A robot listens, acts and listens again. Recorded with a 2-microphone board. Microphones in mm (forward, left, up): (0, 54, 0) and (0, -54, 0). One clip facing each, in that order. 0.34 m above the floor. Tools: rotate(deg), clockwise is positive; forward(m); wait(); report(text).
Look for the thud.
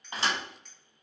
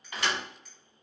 rotate(-30)
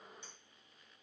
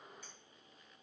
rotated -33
wait()
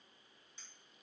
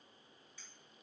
report("I heard a thud, but can't make it out now. It was about 5° right or 120° left.")